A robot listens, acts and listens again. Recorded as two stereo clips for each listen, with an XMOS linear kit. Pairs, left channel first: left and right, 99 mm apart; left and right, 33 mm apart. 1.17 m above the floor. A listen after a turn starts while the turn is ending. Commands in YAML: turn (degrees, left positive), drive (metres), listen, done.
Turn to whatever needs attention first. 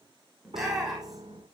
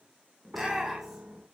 turn: -30
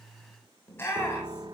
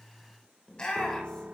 turn: 25
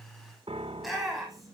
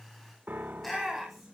done: "Facing the shout, over 4 m away."